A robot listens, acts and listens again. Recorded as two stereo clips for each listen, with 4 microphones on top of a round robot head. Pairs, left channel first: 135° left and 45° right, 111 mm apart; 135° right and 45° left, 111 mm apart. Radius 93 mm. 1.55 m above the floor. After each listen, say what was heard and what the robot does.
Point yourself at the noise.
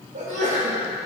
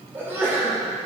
The sneeze: 25° right. Turn 25° right.
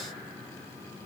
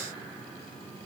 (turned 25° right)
Facing where the sneeze came from. I can't hear it now.